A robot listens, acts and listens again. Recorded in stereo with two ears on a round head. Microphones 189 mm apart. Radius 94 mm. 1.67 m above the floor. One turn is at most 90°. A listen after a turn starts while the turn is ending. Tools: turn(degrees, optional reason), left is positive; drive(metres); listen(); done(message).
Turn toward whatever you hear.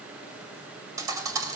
turn(degrees=-15, reason="The thud: about 15° right or 165° right.")
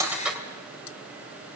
done("Facing the thud.")